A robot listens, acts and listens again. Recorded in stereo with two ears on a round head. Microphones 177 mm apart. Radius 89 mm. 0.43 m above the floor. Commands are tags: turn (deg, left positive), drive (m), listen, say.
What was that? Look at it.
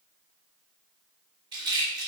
<turn deg="-25"/>
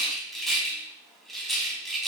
<say>Facing the rattle.</say>